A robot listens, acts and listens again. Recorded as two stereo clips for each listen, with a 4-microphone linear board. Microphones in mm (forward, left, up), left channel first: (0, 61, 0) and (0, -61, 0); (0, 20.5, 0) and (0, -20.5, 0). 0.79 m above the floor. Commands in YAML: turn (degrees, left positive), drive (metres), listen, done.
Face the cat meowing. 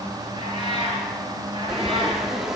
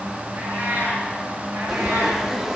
turn: -40
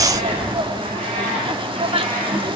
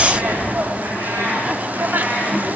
turn: -90
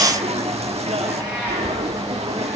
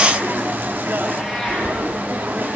turn: -15
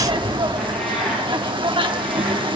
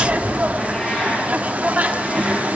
listen: true
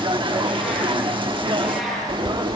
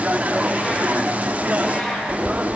done: "Found it: a cat meowing, straight ahead, over 4 m away."